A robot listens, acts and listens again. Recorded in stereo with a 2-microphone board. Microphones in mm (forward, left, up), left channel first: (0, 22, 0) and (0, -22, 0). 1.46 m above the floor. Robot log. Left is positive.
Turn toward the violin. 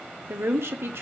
cmd idle
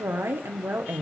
cmd idle
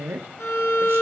cmd yaw +90
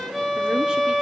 end: Facing the violin.